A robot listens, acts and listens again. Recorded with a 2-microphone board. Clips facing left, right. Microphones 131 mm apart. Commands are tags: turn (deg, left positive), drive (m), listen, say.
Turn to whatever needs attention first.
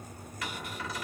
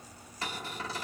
<listen/>
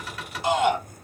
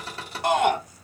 <turn deg="-60"/>
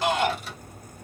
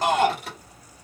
<turn deg="-50"/>
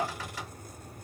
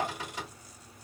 <turn deg="10"/>
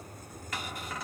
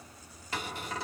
<listen/>
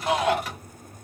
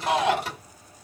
<say>Found it: a shout, straight ahead.</say>